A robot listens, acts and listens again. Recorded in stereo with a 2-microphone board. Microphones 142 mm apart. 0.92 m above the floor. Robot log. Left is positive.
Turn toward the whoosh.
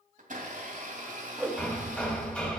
note: The whoosh: about 15° right or 165° right.
cmd yaw -15
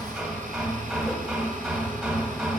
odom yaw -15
cmd idle
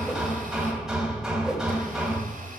cmd idle
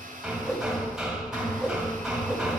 end: Facing the whoosh.